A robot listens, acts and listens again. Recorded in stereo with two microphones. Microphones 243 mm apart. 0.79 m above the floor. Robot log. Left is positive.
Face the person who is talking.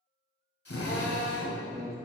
note: The man speaking: about 25° right or 155° right.
cmd yaw -25
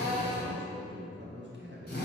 note: So it is at 125° right.
cmd yaw -125
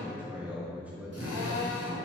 end: Found it: a man speaking, straight ahead.